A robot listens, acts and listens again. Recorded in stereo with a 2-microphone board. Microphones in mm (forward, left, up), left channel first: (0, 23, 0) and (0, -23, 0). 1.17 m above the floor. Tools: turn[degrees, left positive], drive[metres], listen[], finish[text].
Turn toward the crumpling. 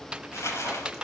Action: turn[90]
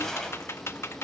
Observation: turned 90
Action: listen[]
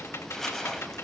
Action: finish[Found it: crumpling, straight ahead.]